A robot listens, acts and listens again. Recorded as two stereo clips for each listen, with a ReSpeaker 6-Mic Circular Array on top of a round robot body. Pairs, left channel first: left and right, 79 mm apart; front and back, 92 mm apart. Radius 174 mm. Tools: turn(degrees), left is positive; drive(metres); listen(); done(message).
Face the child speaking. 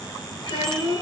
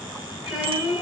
turn(degrees=95)
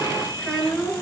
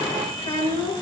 turn(degrees=10)
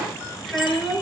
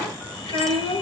done("Found it: a child speaking, straight ahead, over 4 m away.")